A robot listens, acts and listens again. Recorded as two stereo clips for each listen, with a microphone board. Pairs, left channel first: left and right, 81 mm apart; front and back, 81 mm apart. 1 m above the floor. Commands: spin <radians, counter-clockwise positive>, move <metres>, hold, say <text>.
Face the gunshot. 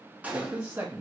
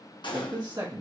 spin -0.35
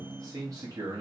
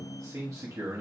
say Facing where the gunshot came from. I can't hear it now.